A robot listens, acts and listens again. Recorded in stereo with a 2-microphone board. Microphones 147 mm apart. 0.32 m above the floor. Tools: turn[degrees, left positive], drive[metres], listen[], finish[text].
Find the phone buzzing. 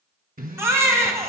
Thought: The phone buzzing: about 75° right or 105° right.
Action: turn[-75]
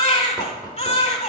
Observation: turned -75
Action: listen[]
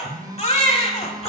Thought: So it is at 25° right.
Action: turn[-25]
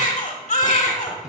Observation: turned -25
Action: listen[]
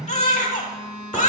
Action: finish[Facing the phone buzzing, 1 to 2 m away.]